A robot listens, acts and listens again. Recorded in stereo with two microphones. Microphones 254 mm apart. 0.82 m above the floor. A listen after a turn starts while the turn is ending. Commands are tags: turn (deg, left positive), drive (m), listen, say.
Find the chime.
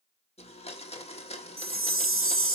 <turn deg="-55"/>
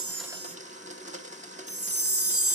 <turn deg="-65"/>
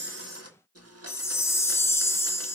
<turn deg="10"/>
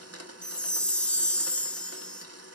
<say>Found it: a chime, straight ahead, under 1 m away.</say>